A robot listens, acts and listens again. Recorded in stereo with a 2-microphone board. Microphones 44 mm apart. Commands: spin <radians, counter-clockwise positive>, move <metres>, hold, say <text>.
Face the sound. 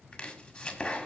spin 0.52
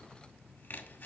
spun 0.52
spin 2.09
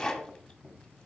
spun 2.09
spin 0.26
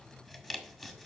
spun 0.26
say Facing the chopping, 1 to 2 m away.